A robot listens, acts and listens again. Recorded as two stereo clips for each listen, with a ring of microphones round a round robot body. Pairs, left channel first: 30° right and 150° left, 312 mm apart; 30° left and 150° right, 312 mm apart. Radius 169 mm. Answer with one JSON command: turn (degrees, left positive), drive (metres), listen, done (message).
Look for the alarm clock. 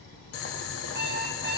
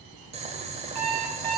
{"turn": -155}
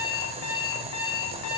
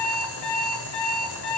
{"done": "Found it: an alarm clock, straight ahead."}